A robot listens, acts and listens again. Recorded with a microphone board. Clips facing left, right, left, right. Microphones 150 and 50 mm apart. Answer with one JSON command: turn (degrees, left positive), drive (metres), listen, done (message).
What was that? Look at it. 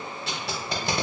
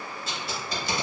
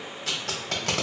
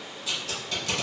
{"turn": 65}
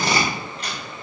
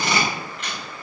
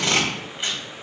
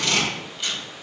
{"turn": 40}
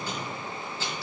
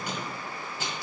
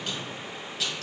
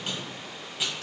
{"turn": -15}
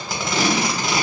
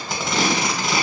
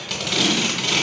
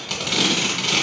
{"done": "Found it: tape being pulled, straight ahead, under 1 m away."}